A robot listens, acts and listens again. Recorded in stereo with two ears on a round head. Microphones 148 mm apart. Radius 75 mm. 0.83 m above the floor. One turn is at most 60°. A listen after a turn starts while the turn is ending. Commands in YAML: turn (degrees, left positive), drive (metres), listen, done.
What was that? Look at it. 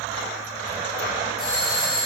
turn: -30
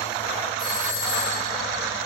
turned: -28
turn: 25
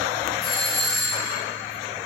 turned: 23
done: "Found it: a doorbell, straight ahead."